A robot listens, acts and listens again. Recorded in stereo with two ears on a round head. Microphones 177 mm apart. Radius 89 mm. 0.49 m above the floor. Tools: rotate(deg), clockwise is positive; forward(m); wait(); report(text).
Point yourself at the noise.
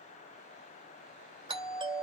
rotate(25)
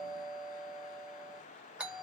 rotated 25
report("Facing the doorbell, 2 to 4 m away.")